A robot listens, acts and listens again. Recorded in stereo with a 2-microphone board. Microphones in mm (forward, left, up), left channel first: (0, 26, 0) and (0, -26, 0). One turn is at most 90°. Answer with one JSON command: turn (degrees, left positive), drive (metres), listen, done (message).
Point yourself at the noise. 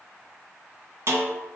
{"turn": -60}
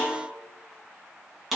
{"done": "Facing the snare drum, 1 to 2 m away."}